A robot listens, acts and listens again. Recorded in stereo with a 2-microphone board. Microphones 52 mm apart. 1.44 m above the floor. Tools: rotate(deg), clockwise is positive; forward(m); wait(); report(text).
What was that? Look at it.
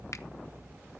wait()
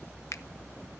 rotate(-90)
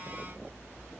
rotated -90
wait()
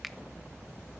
wait()
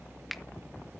report("Facing the finger snap, under 1 m away.")